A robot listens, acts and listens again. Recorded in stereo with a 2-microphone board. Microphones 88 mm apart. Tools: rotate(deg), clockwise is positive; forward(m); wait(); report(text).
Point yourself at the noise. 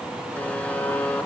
rotate(-15)
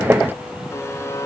rotate(-150)
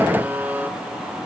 rotate(20)
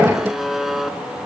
report("Found it: a buzzer, straight ahead, 2 to 4 m away.")